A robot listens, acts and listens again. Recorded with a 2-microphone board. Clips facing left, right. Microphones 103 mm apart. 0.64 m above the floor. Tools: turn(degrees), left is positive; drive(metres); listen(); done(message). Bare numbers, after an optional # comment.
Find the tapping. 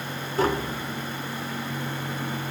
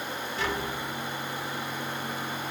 # The tapping: about 40° left or 140° left.
turn(40)
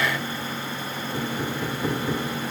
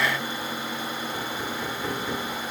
# So it is at 10° left.
turn(10)
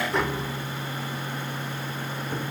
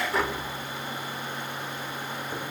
done("Found it: tapping, straight ahead.")